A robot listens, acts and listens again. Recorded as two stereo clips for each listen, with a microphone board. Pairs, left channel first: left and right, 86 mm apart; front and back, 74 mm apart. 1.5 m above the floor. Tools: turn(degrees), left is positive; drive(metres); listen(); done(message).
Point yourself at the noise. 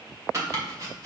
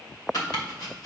turn(degrees=-35)
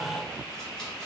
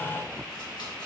listen()
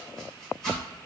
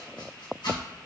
listen()
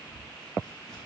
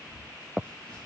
done("Facing where the chopping came from. I can't hear it now.")